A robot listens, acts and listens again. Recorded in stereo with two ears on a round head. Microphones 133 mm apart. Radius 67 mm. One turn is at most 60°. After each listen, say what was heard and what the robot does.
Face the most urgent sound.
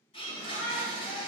The shout: about 60° left or 120° left. Turn 60° left.
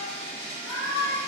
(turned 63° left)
So it is at 35° left. Turn 35° left.
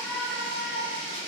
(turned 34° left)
Found it: a shout, straight ahead, 1 to 2 m away.